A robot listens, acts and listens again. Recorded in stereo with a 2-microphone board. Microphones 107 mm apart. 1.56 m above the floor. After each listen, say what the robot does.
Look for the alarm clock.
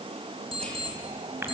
Turn 55° right.
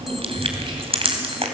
Keep listening.
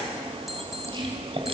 Facing the alarm clock, 2 to 4 m away.